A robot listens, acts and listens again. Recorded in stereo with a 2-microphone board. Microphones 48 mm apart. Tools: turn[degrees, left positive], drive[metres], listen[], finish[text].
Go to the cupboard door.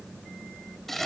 Action: listen[]
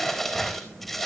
Action: listen[]
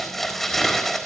Action: finish[I can't make out a cupboard door, only crumpling.]